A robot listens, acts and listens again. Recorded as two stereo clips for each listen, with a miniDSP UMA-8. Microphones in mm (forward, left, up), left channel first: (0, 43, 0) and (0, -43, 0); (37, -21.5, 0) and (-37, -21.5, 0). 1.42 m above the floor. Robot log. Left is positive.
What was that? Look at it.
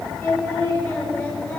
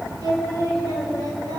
note: The singing: 155° left.
cmd yaw +155
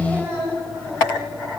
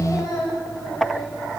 note: The singing is now 25° right.
cmd yaw -25
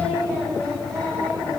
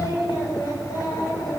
note: The singing is now 10° left.
cmd yaw +10
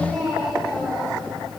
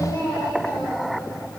end: Facing the singing, over 4 m away.